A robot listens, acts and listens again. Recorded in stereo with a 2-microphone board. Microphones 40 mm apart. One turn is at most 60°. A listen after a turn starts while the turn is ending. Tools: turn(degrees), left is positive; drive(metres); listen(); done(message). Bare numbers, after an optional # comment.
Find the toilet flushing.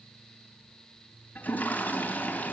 # The toilet flushing: about 45° left or 135° left.
turn(45)
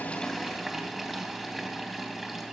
done("Found it: a toilet flushing, straight ahead, 2 to 4 m away.")